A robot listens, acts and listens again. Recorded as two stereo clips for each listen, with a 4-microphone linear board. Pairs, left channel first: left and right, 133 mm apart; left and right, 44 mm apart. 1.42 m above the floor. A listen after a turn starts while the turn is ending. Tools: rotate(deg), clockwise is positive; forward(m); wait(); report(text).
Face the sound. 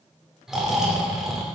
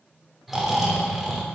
rotate(30)
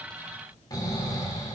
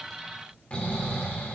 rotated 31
rotate(-30)
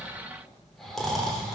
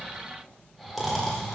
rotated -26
report("Found it: snoring, straight ahead, 2 to 4 m away.")